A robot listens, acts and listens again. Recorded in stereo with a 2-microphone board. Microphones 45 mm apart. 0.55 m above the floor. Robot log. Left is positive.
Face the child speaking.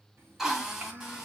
note: The child speaking: about 45° right or 135° right.
cmd yaw -45
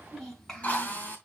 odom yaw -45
note: So it is at 10° left.
cmd yaw +10
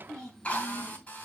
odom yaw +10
note: The child speaking is now 15° left.
cmd yaw +15
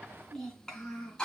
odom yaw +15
note: The child speaking is now 15° left.
cmd yaw +15
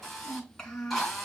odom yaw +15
note: The child speaking is now 10° left.
cmd yaw +10
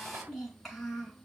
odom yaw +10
end: Found it: a child speaking, straight ahead.